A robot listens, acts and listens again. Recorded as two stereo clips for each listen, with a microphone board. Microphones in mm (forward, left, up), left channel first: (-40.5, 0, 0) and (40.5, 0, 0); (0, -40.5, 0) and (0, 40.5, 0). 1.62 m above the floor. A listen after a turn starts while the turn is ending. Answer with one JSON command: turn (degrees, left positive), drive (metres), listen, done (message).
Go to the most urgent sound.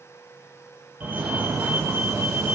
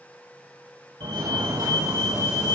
{"turn": 65}
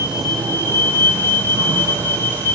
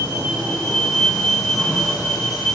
{"drive": 1.0}
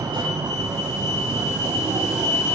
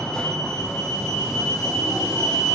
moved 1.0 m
{"turn": -10}
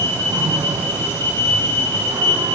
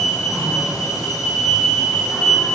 {"drive": 1.0}
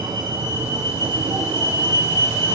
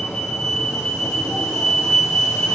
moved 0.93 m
{"turn": -10}
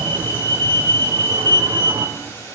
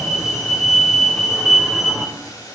{"drive": 1.0}
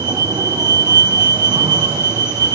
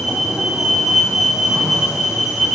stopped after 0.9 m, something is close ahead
{"done": "Arrived at the fire alarm, straight ahead."}